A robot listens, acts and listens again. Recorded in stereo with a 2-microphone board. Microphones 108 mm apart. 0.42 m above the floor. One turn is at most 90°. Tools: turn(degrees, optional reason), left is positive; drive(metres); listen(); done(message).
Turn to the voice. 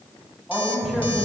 turn(degrees=30)
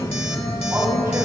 listen()
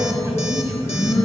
turn(degrees=-30, reason="So it is at 30° right.")
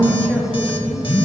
listen()
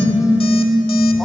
listen()
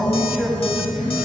done("Found it: a man speaking, straight ahead.")